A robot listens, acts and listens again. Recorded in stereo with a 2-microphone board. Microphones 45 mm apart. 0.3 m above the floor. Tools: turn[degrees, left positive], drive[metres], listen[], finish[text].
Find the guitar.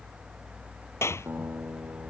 Thought: The guitar: about 55° right or 125° right.
Action: turn[-55]
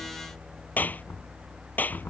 Action: listen[]
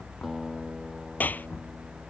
Action: finish[Found it: a guitar, straight ahead.]